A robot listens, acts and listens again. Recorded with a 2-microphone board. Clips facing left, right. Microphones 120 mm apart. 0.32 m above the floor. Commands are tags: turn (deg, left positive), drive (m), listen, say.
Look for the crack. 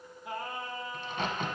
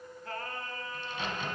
<turn deg="50"/>
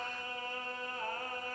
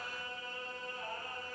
<listen/>
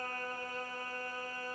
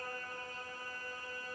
<say>I heard a crack, but can't make it out now. It was about straight ahead or 80° left.</say>